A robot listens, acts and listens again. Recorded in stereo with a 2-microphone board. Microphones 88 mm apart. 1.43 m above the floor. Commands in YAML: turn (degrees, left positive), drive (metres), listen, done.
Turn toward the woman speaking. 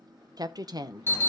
turn: -45
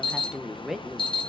done: "Facing the woman speaking."